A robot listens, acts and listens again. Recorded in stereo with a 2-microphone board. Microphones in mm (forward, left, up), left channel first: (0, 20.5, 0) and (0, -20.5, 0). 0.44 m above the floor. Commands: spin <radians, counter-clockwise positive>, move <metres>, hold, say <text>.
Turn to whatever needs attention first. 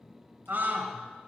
spin -0.87
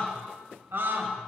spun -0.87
spin -1.31
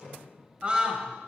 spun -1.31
spin -0.52
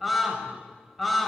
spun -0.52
say Found it: a scream, straight ahead, 1 to 2 m away.